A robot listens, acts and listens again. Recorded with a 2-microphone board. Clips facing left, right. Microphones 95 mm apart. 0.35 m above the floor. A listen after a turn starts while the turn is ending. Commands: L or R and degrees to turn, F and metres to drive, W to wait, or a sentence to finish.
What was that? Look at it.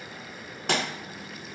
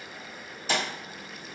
L70
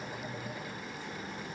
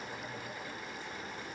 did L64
W
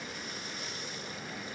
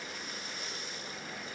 I heard a pop, but can't make it out now. It was about 5° left or 45° left.